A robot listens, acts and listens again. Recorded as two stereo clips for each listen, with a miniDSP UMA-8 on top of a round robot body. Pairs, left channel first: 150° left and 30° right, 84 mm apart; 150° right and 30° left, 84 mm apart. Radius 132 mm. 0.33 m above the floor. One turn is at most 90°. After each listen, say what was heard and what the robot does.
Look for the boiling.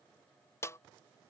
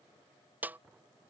Keep listening.
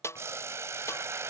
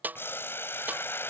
The boiling: 85° right. Turn 85° right.
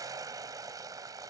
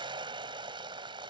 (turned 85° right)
The boiling is now 15° left. Turn 15° left.
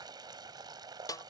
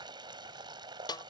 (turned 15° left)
Found it: boiling, straight ahead.